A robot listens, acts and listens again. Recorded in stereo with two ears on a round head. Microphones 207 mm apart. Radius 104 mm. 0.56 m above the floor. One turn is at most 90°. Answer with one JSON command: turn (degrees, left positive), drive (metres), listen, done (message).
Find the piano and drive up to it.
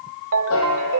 {"turn": 65}
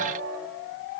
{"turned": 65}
{"listen": true}
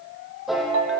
{"drive": 1.0}
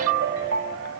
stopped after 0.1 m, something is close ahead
{"listen": true}
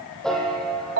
{"done": "Something is in my way. I am facing the piano but have not reached it."}